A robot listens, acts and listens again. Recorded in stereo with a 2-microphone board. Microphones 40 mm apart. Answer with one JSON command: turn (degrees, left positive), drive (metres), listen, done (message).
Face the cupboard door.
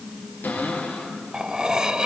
{"turn": 55}
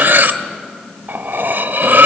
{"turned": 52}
{"listen": true}
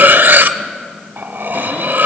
{"listen": true}
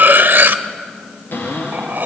{"turn": 75}
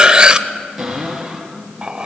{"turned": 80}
{"done": "Facing the cupboard door, over 4 m away."}